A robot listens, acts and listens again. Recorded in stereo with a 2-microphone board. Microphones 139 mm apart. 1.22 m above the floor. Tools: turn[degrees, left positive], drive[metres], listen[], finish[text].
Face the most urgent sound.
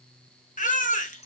Thought: The baby crying: about 65° left or 115° left.
Action: turn[65]
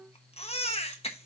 Thought: So it is at 45° left.
Action: turn[45]
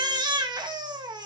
Thought: The baby crying is now 30° right.
Action: turn[-30]
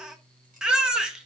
Action: finish[Facing the baby crying, 1 to 2 m away.]